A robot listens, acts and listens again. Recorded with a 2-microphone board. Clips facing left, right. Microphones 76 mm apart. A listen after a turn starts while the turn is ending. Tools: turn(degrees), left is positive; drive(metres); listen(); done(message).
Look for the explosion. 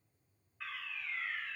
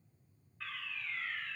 listen()
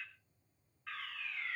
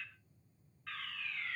listen()
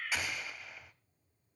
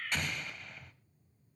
turn(degrees=30)
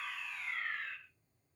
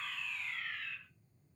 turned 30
listen()
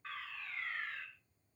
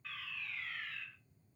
done("I heard an explosion, but can't make it out now. It was about 25° right or 145° left.")